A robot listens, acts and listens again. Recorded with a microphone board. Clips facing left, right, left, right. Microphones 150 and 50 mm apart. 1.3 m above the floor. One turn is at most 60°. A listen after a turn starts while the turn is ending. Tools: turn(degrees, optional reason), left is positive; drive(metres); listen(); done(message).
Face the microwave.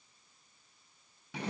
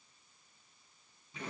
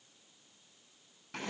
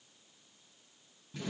listen()
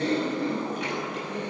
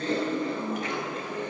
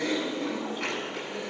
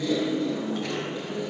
listen()
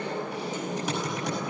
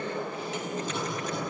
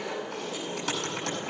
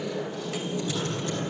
done("I can't make out a microwave to turn to.")